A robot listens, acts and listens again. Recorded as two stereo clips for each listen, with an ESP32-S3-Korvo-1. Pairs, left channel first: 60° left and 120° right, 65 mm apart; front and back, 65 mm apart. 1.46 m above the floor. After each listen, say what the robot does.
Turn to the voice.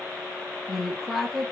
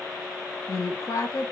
Turn 30° right.
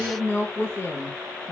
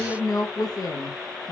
Facing the woman speaking, under 1 m away.